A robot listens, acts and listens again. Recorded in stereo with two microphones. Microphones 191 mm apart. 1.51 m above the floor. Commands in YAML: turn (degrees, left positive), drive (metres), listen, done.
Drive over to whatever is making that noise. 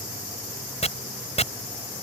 turn: 35
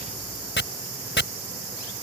turn: 110
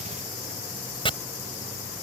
turn: 25
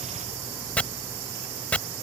drive: 1.0
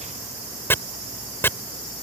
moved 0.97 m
turn: 10
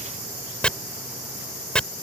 drive: 1.0
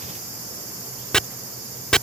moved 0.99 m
drive: 1.0
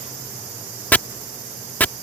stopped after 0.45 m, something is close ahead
turn: 10
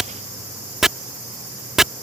done: "I am next to the chopping."